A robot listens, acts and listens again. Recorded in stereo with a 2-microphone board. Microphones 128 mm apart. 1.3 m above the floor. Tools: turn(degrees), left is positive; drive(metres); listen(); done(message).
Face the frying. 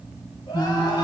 turn(degrees=20)
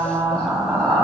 done("Found it: frying, straight ahead, 2 to 4 m away.")